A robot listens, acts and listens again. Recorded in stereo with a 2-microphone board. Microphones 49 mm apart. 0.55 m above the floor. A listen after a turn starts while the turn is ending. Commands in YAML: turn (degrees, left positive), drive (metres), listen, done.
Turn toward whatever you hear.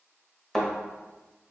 turn: 30
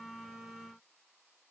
listen: true
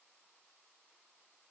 done: "I heard a thud, but can't make it out now. It was about 25° right or 145° left."